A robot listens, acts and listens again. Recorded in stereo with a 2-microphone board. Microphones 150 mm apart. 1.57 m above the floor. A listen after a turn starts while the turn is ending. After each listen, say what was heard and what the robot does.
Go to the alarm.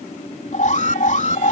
The alarm: about 60° left or 120° left. Turn 60° left.
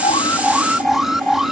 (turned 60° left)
Drive 1.0 m forward.
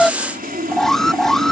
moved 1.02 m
Drive 1.0 m forward.
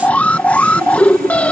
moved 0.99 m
The alarm is now 10° left. Turn 10° left.
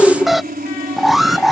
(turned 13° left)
Drive 1.0 m forward.
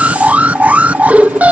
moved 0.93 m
The alarm is now 10° right. Turn 10° right.
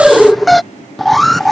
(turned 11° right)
Drive 1.0 m forward.
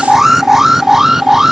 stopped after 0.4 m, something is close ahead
I am next to the alarm.